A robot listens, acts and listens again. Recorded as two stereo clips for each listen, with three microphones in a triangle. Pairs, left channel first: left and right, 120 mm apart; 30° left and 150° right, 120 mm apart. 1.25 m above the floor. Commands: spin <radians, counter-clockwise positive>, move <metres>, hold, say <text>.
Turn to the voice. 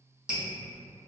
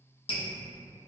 hold
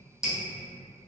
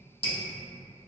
hold
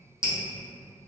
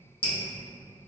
say I can't make out anyone speaking to turn to.